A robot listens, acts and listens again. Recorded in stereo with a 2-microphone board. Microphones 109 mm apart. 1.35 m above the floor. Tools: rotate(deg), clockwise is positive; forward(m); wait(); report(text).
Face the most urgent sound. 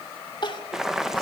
rotate(-45)
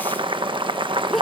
report("Facing the crying.")